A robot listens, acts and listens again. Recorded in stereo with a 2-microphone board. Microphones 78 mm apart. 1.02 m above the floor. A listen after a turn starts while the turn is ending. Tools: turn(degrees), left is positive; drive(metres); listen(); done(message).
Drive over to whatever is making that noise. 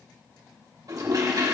turn(degrees=-50)
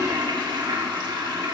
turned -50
turn(degrees=-80)
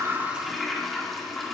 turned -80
drive(metres=1.0)
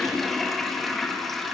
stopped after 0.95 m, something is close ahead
done("Arrived at the toilet flushing, straight ahead.")